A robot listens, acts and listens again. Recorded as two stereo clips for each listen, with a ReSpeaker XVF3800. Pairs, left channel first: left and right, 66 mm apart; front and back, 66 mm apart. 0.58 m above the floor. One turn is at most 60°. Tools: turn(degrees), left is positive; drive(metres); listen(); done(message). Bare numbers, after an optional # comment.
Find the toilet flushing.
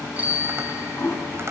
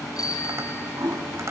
# The toilet flushing: 140° left.
turn(60)
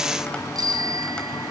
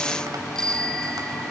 # Nothing new. It was at 80° left.
turn(60)
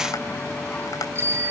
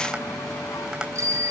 # Nothing new. It was at 20° left.
turn(20)
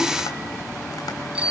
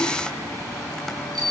done("Facing where the toilet flushing came from. I can't hear it now.")